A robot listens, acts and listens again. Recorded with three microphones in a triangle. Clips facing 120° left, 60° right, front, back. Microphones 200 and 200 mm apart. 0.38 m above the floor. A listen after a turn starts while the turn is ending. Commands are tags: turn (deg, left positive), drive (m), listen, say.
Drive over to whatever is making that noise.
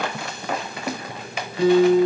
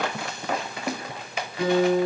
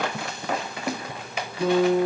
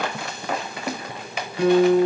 <turn deg="-175"/>
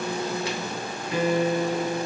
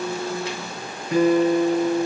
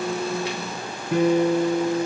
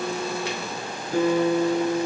<turn deg="-10"/>
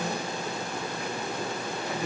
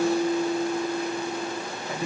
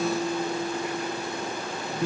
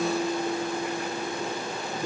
<drive m="1.0"/>
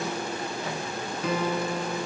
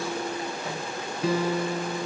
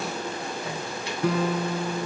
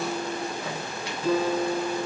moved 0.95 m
<drive m="1.0"/>
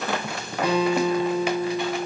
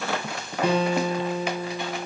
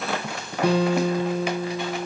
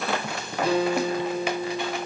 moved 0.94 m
<drive m="1.0"/>
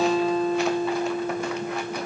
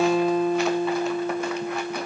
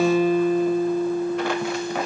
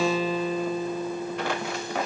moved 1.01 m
<drive m="1.0"/>
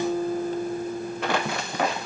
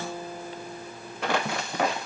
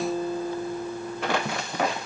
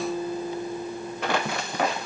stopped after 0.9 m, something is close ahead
<turn deg="10"/>
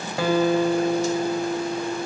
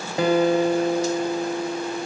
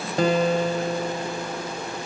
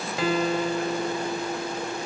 <say>Arrived at the guitar, straight ahead.</say>